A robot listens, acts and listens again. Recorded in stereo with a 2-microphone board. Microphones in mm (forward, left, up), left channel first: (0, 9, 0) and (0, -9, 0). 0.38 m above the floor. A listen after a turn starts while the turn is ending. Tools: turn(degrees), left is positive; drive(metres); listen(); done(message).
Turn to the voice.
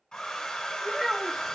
turn(degrees=-30)
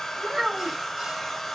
listen()
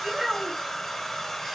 turn(degrees=-140)
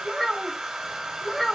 turn(degrees=15)
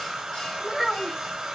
done("Found it: a child speaking, straight ahead.")